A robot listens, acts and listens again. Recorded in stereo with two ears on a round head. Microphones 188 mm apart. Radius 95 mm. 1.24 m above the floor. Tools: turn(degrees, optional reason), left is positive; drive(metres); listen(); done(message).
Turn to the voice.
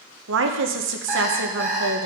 turn(degrees=-70, reason="The woman speaking: about 70° right or 110° right.")
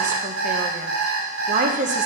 turn(degrees=-40, reason="So it is at 40° right.")
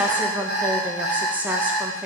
turn(degrees=-10, reason="The woman speaking is now 10° right.")
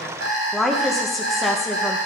done("Found it: a woman speaking, straight ahead, under 1 m away.")